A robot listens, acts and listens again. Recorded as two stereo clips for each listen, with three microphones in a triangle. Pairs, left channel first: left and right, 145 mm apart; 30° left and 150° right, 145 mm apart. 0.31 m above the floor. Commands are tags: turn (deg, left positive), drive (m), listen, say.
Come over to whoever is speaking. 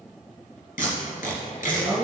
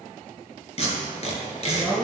<turn deg="-40"/>
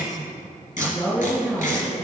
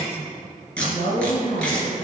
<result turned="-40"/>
<drive m="1.0"/>
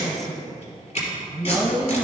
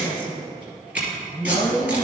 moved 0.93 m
<drive m="1.0"/>
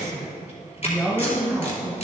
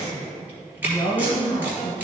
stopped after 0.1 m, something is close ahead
<say>Arrived at the woman speaking, straight ahead.</say>